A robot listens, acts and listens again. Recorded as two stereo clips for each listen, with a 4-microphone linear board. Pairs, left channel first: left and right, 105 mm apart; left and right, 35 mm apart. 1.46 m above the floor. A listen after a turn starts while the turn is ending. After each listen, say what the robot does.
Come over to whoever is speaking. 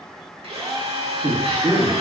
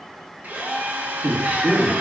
Turn 60° right.
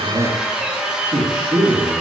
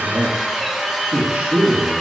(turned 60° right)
Turn 60° right.
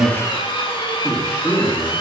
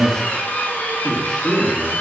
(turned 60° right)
Drive 1.0 m forward.
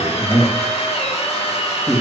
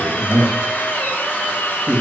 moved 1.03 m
Drive 1.0 m forward.
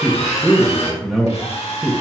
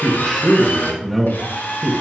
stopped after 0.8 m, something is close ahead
I am next to the man speaking.